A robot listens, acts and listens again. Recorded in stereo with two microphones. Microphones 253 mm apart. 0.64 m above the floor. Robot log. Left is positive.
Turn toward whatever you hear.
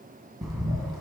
cmd yaw +30
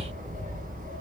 note: So it is at 30° right.
cmd yaw -30
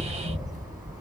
end: Facing the bird, 1 to 2 m away.